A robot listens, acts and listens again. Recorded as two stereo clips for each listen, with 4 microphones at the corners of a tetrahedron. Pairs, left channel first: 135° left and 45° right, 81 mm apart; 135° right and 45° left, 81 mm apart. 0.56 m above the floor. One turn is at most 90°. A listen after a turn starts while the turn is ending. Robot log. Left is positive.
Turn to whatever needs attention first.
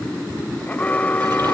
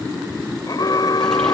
note: The alarm: 155° right.
cmd yaw -90
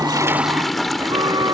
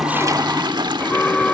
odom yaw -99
note: The alarm is now 60° right.
cmd yaw -60
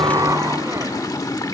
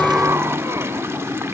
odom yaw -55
cmd idle
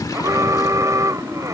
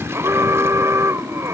end: Facing the alarm.